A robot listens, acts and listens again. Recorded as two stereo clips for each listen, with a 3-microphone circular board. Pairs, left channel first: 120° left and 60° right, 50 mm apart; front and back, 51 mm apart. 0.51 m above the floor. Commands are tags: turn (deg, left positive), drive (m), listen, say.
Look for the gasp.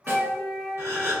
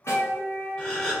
<turn deg="-70"/>
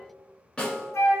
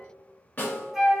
<say>Facing where the gasp came from. I can't hear it now.</say>